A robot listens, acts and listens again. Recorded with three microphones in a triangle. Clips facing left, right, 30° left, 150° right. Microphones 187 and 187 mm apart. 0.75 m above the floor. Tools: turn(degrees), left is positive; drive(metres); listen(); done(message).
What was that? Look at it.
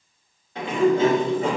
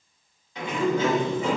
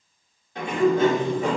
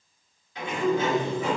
turn(degrees=60)
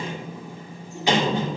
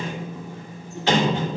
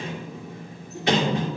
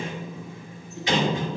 turn(degrees=15)
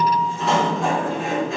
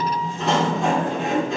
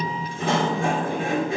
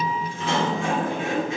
done("Found it: a sliding door, straight ahead, 2 to 4 m away.")